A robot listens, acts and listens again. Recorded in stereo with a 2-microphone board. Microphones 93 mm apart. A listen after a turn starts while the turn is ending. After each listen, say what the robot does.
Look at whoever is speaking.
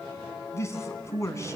Turn 30° left.
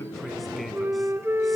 Keep listening.
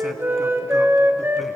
Keep listening.
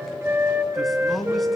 Found it: a man speaking, straight ahead.